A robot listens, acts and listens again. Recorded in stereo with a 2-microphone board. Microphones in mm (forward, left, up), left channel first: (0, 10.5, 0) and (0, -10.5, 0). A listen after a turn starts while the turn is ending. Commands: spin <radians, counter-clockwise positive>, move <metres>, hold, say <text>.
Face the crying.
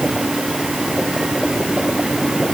hold
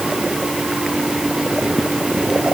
hold
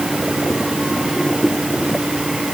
say I can't make out crying.